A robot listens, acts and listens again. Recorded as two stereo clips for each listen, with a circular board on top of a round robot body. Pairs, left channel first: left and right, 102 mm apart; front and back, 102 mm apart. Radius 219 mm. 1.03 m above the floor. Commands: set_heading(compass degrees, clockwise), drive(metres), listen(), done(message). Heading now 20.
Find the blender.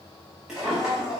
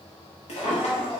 set_heading(60)
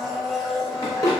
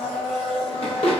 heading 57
done("Found it: a blender, straight ahead, under 1 m away.")